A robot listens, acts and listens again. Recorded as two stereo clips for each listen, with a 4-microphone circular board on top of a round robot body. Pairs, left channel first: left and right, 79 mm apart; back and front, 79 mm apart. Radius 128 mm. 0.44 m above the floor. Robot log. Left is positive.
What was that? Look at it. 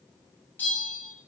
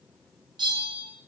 note: The bell: 25° left.
cmd yaw +25
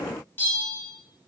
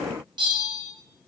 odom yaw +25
note: The bell is now 25° left.
cmd yaw +25
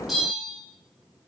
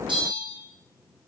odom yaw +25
end: Found it: a bell, straight ahead.